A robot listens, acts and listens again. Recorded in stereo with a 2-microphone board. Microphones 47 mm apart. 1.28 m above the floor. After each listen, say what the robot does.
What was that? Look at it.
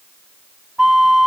Turn 30° right.
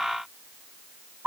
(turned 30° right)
Turn 135° right.
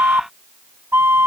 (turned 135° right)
Turn 65° right.
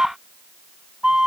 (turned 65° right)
Turn 20° right.
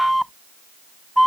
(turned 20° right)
Found it: a flute, straight ahead.